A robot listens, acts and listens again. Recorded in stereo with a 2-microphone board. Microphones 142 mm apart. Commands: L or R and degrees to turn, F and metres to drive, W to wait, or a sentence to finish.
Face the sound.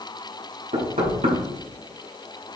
R55
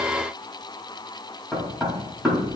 Found it: knocking, straight ahead.